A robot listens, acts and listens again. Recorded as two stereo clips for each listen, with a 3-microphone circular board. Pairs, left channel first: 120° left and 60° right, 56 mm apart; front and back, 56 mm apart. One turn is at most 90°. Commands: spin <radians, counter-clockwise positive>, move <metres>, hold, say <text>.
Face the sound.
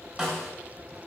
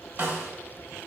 spin -1.57
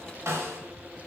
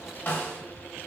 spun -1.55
spin -0.87
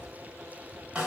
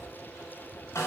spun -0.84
say Found it: a snare drum, straight ahead, under 1 m away.